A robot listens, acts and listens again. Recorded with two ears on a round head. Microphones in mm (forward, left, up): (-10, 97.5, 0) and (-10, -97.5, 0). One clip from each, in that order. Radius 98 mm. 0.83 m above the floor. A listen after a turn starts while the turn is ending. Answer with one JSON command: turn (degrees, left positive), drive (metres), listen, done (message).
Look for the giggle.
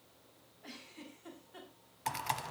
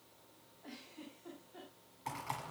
{"turn": 60}
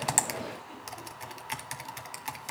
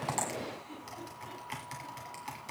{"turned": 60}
{"listen": true}
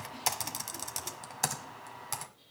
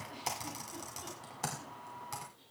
{"listen": true}
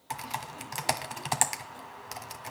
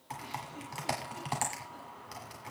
{"done": "I heard a giggle, but can't make it out now. It was about straight ahead or 60° left."}